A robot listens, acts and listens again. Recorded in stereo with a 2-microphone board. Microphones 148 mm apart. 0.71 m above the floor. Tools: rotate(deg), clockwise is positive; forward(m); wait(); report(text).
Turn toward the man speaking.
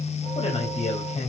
rotate(-45)
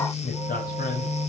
rotate(-75)
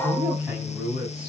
rotate(10)
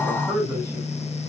report("Facing the man speaking.")